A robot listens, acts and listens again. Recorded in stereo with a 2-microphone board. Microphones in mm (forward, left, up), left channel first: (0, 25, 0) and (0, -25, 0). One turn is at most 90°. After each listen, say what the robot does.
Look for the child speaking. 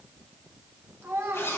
Turn 55° right.
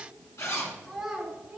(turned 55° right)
Found it: a child speaking, straight ahead.